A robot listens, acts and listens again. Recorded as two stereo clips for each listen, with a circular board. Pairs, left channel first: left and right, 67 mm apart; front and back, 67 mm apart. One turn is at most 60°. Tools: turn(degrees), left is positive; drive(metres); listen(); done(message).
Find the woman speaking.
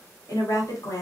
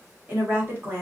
turn(degrees=60)
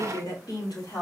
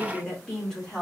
turn(degrees=60)
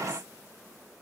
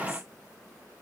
turn(degrees=20)
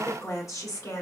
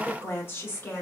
turn(degrees=55)
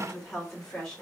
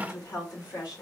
done("Found it: a woman speaking, straight ahead.")